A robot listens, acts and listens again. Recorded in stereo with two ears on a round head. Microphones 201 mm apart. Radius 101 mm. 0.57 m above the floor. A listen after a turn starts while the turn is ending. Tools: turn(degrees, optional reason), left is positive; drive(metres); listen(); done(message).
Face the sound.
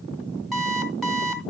turn(degrees=30)
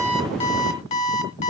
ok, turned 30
turn(degrees=150, reason="So it is at 150° left.")
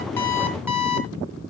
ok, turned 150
turn(degrees=-10, reason="The alarm clock is now 10° right.")
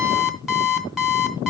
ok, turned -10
done("Found it: an alarm clock, straight ahead, 2 to 4 m away.")